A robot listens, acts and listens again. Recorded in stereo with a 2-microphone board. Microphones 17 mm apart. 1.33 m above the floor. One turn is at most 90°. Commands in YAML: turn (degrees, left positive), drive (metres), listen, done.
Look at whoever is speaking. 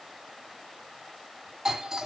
listen: true
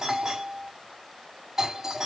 listen: true
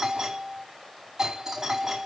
done: "I can't make out anyone speaking to turn to."